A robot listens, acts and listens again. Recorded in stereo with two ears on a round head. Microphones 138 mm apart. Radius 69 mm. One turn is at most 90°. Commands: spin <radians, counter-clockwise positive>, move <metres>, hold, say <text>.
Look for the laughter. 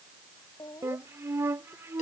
spin 0.35
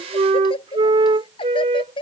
spin 0.61
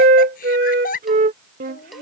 spin 1.57
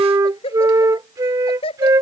spin 0.61
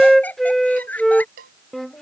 spin 0.17
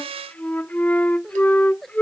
say Facing the laughter.